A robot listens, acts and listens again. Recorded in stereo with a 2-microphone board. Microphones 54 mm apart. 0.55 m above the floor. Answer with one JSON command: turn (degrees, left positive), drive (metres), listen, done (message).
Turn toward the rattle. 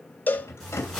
{"turn": 55}
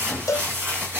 {"listen": true}
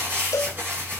{"listen": true}
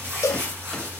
{"done": "I heard a rattle, but can't make it out now. It was about straight ahead or 70° left."}